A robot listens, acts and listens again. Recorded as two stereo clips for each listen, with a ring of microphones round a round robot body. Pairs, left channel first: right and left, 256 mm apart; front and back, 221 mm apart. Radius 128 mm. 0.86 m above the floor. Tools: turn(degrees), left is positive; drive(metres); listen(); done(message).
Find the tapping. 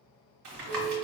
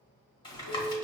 turn(degrees=65)
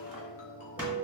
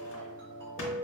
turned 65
done("Found it: tapping, straight ahead.")